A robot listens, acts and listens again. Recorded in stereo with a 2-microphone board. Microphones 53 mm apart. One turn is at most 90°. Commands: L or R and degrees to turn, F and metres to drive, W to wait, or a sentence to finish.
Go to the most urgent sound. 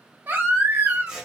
R45
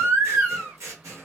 R75
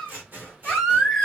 F1.0
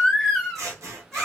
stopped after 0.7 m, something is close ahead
L10
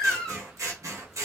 Arrived at the baby crying, straight ahead.